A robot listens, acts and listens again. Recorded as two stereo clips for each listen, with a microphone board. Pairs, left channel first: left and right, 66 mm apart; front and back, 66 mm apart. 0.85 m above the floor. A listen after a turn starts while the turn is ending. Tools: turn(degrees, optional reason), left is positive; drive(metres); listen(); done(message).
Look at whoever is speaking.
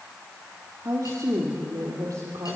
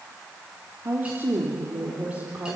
turn(degrees=-115, reason="The woman speaking: 115° right.")
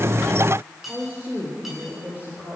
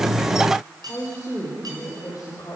turn(degrees=-25, reason="The woman speaking is now 25° right.")
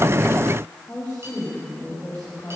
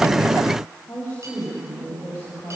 turn(degrees=20, reason="The woman speaking is now 20° left.")
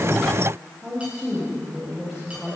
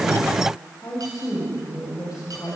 done("Found it: a woman speaking, straight ahead, over 4 m away.")